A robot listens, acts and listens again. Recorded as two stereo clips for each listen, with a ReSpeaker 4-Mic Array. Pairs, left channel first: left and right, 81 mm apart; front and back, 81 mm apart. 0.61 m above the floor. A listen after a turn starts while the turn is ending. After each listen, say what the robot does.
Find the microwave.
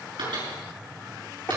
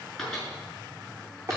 Turn 85° right.
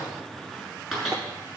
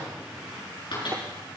Found it: a microwave, straight ahead, over 4 m away.